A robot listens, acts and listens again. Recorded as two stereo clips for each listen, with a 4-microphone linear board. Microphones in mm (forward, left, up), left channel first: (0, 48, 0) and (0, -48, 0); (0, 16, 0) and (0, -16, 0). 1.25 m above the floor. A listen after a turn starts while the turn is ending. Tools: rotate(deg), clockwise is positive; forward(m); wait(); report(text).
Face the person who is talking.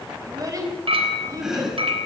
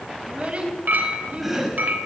rotate(35)
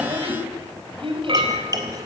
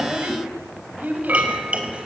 rotate(115)
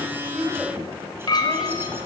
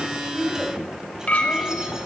wait()
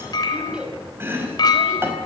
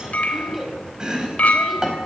rotate(10)
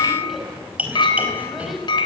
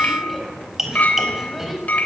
report("Found it: a child speaking, straight ahead.")